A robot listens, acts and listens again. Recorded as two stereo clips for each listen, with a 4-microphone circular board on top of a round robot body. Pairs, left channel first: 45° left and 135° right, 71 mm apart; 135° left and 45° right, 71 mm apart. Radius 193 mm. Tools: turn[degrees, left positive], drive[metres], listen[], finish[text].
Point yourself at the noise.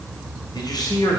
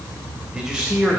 Thought: The man speaking: 30° left.
Action: turn[30]
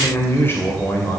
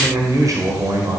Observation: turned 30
Thought: The man speaking is now 15° right.
Action: turn[-15]
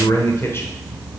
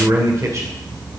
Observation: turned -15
Thought: The man speaking is now 10° right.
Action: turn[-10]
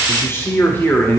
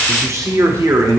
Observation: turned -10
Thought: The man speaking is now 15° right.
Action: turn[-15]
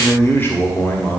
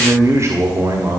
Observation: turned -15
Thought: The man speaking is now 20° right.
Action: turn[-20]
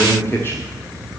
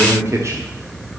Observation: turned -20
Action: finish[Found it: a man speaking, straight ahead.]